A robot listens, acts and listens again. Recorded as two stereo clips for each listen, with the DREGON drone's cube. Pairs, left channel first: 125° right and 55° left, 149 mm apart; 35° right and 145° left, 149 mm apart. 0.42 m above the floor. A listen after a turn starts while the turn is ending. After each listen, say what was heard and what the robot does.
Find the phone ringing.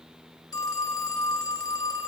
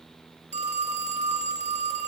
The phone ringing: 175° left. Turn 175° left.
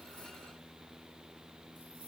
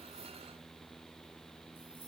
Keep listening.
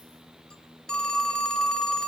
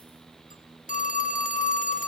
The phone ringing is now 40° right. Turn 40° right.
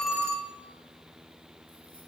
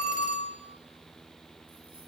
The phone ringing is now 15° right. Turn 15° right.
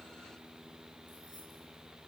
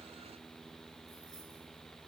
Keep listening.
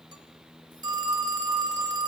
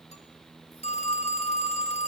Found it: a phone ringing, straight ahead, under 1 m away.